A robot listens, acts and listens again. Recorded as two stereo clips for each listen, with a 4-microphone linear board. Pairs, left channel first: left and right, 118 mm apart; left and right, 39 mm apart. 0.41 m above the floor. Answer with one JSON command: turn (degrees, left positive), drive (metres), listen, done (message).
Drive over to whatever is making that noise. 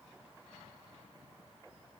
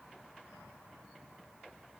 {"listen": true}
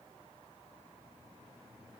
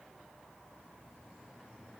{"listen": true}
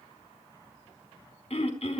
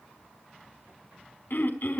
{"turn": 65}
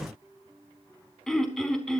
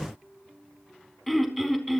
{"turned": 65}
{"drive": 1.0}
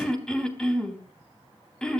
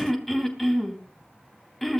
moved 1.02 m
{"turn": 10}
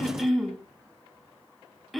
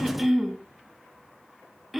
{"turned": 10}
{"drive": 1.0}
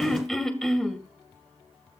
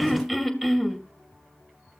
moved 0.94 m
{"drive": 1.0}
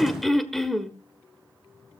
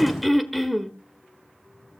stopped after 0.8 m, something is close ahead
{"done": "Arrived at the throat clearing, straight ahead."}